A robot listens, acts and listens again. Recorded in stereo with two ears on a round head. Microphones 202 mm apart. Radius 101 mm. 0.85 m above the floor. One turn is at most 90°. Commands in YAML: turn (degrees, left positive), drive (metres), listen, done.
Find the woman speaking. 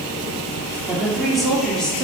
turn: 30
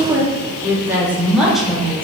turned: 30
turn: 30
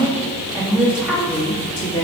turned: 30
turn: 30
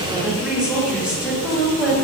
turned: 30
turn: -30
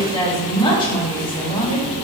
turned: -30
turn: 20
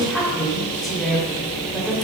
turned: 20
done: "Facing the woman speaking, 1 to 2 m away."